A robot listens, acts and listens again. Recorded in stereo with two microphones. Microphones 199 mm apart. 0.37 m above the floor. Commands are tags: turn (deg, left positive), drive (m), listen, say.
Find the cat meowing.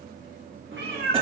<turn deg="-70"/>
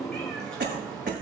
<say>Facing the cat meowing, 2 to 4 m away.</say>